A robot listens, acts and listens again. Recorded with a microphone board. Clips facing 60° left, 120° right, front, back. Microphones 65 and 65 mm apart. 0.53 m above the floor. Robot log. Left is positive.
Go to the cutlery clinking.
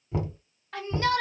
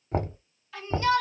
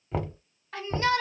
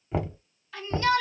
cmd idle
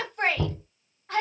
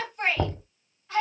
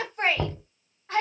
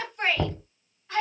cmd idle
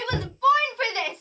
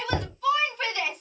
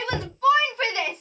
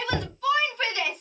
end: I can't make out cutlery clinking, only a shout and knocking.